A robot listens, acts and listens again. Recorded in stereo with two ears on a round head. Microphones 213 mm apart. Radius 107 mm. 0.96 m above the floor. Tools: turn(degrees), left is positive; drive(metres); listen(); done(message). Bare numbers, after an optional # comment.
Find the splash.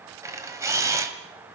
listen()
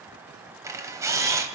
listen()
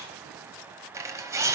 done("I can't make out a splash, only a camera shutter.")